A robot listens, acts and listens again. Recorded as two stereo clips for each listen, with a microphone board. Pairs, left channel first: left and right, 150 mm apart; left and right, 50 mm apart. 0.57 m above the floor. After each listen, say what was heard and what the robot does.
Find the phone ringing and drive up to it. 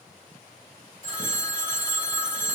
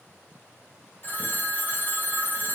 The phone ringing: about 45° left or 135° left. Turn 45° left.
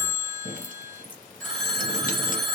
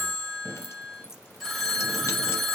Drive 1.0 m forward.
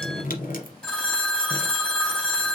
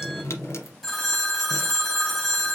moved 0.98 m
The phone ringing is now 10° left. Turn 10° left.
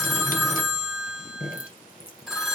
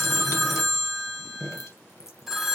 Drive 1.0 m forward.
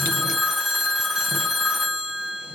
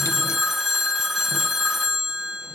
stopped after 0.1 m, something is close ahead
Arrived at the phone ringing, straight ahead.